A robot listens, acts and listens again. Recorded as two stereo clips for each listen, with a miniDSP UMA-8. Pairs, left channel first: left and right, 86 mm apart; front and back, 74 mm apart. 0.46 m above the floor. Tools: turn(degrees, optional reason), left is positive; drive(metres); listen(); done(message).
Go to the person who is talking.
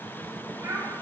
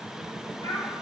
turn(degrees=-30, reason="The child speaking: 30° right.")
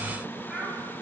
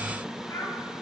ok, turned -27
drive(metres=1.0)
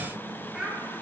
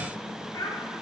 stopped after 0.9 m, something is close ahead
turn(degrees=-10, reason="The child speaking is now 10° right.")
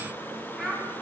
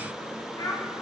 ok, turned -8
done("I am next to the child speaking.")